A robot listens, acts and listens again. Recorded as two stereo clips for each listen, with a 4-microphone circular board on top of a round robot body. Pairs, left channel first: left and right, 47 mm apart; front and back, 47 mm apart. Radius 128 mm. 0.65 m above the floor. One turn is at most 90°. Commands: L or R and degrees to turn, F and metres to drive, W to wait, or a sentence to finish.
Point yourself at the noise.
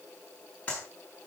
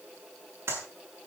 L90
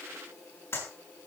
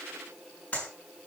L65
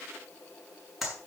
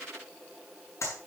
Found it: a clap, straight ahead, over 4 m away.